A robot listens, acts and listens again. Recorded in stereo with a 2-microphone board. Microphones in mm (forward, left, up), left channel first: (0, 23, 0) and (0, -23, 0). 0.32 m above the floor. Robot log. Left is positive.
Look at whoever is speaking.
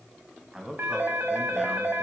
note: The man speaking: about 20° right or 160° right.
cmd yaw -20
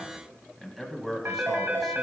end: Facing the man speaking.